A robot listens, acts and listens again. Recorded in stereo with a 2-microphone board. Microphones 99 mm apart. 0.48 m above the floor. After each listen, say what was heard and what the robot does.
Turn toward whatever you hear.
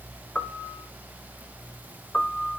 Turn 30° left.
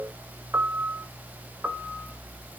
So it is at 15° right. Turn 15° right.
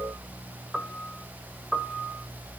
Found it: a piano, straight ahead.